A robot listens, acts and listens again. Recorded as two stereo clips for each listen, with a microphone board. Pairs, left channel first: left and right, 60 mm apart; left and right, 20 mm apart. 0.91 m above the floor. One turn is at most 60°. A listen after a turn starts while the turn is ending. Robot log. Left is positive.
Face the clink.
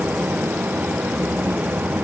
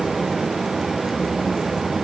cmd idle
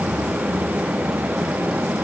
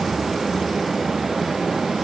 cmd idle
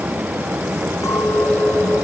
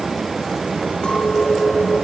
note: The clink: about 60° left or 120° left.
cmd yaw +60
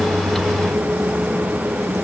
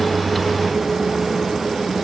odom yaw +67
cmd idle
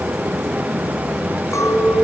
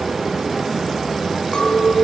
note: So it is at 55° left.
cmd yaw +55
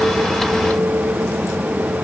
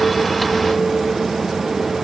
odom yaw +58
cmd idle
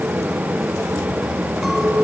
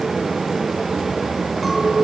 end: Facing the clink, over 4 m away.